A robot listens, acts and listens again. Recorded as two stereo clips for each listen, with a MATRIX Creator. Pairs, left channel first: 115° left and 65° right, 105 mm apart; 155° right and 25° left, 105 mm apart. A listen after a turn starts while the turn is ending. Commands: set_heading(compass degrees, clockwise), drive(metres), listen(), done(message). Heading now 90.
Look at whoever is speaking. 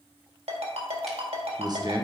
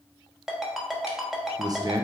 set_heading(115)
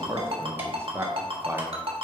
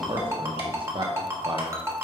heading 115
done("Facing the man speaking, under 1 m away.")